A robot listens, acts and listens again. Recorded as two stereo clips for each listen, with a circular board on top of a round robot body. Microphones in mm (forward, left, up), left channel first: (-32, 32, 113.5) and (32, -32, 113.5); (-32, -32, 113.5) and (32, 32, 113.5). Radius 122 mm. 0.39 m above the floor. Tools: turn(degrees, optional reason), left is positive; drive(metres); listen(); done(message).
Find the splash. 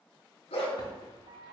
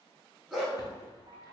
turn(degrees=170, reason="The splash: 170° left.")
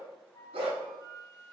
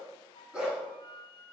done("I heard a splash from this way, but can't make it out now.")